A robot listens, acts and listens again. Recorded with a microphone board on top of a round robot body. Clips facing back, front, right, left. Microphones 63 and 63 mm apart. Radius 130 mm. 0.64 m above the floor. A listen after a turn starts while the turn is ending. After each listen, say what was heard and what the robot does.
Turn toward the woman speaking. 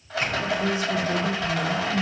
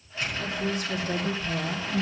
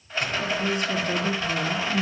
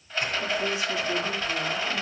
The woman speaking: 35° right. Turn 35° right.
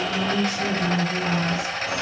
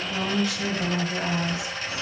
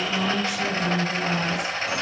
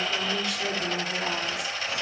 Found it: a woman speaking, straight ahead.